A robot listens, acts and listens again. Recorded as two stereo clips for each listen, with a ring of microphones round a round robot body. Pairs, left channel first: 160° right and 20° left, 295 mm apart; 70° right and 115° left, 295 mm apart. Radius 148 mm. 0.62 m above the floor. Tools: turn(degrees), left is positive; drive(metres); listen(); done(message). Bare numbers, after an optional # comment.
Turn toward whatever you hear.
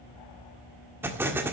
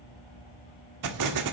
# The explosion: 105° left.
turn(105)
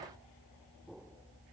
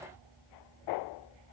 done("Facing where the explosion came from. I can't hear it now.")